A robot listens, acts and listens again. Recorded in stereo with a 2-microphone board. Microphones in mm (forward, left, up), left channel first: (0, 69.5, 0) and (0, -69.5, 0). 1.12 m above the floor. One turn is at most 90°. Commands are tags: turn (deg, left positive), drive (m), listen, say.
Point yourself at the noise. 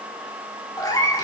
<turn deg="25"/>
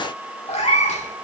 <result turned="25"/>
<turn deg="90"/>
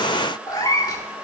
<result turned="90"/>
<turn deg="30"/>
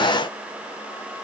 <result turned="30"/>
<listen/>
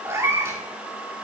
<turn deg="-20"/>
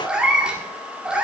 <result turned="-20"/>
<say>Facing the cat meowing.</say>